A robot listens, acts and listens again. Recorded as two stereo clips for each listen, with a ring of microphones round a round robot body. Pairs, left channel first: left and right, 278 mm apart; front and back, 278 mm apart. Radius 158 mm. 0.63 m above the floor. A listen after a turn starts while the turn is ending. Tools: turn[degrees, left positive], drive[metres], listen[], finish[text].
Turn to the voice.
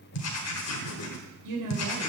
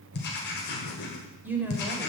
Thought: The woman speaking: 95° right.
Action: turn[-95]
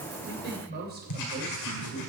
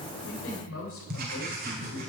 Thought: The woman speaking is now 35° right.
Action: turn[-35]
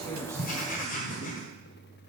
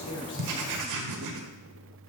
Action: listen[]
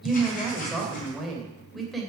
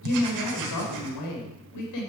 Action: finish[Found it: a woman speaking, straight ahead.]